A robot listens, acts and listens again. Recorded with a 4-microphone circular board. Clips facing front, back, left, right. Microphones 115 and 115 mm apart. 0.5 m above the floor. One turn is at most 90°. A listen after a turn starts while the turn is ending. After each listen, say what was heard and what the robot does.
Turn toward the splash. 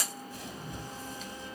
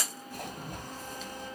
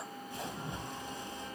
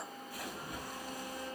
The splash: 155° left. Turn 90° left.
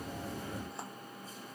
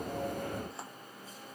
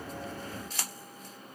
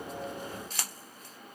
Nothing new. It was at 65° left. Turn 65° left.
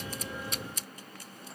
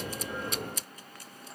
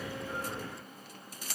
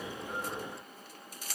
Facing where the splash came from. I can't hear it now.